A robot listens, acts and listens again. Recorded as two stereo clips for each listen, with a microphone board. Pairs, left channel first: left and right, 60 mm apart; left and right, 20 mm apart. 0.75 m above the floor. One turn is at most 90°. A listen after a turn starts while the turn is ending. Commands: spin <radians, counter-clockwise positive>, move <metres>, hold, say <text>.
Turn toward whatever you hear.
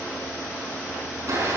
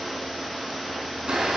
spin -1.05
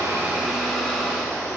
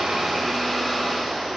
say Facing the blender.